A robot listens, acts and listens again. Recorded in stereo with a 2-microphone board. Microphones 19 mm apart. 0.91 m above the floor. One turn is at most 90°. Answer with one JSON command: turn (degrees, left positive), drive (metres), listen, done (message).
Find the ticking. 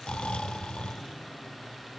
{"listen": true}
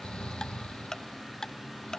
{"turn": 35}
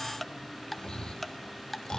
{"done": "Found it: ticking, straight ahead, 1 to 2 m away."}